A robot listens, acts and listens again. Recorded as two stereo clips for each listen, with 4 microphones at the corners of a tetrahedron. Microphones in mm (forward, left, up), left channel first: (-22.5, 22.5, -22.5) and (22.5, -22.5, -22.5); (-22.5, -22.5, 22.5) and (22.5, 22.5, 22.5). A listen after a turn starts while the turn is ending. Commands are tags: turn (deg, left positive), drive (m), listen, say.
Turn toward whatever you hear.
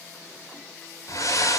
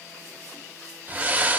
<turn deg="105"/>
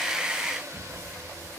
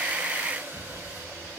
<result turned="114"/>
<turn deg="-10"/>
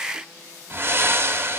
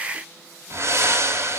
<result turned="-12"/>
<say>Facing the breathing.</say>